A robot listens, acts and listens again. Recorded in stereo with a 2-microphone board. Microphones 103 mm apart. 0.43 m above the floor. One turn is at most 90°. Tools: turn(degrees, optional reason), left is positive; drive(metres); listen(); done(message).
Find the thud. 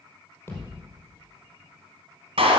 turn(degrees=25, reason="The thud: about 25° left or 155° left.")
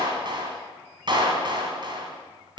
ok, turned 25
listen()
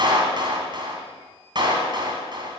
done("I heard a thud, but can't make it out now. It was about straight ahead or 130° left.")